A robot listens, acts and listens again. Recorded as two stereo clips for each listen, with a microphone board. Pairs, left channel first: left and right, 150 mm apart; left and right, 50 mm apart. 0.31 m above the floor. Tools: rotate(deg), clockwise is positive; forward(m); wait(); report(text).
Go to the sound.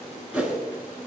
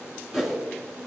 rotate(30)
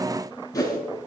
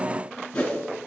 rotate(-25)
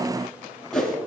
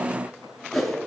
forward(1.0)
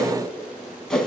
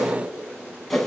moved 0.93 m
forward(1.0)
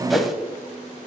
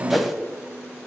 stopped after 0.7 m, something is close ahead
report("Arrived at the whoosh, straight ahead.")